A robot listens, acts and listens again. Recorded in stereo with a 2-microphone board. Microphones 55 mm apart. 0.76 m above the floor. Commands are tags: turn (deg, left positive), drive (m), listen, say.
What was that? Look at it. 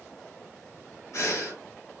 <turn deg="60"/>
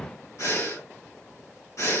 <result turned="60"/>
<turn deg="60"/>
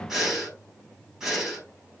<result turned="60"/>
<turn deg="-10"/>
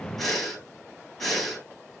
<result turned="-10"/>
<say>Facing the breathing.</say>